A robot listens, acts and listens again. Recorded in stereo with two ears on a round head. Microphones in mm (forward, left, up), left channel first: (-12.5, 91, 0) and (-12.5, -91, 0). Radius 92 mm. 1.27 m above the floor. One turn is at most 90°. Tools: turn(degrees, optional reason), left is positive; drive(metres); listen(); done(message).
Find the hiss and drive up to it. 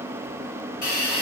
turn(degrees=45, reason="The hiss: about 45° left or 135° left.")
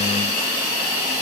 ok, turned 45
turn(degrees=90, reason="So it is at 90° left.")
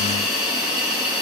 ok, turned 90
drive(metres=1.0)
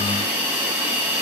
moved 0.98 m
turn(degrees=-10, reason="The hiss is now 10° right.")
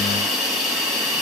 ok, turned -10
drive(metres=1.0)
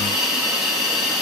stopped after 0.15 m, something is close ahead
done("I am next to the hiss.")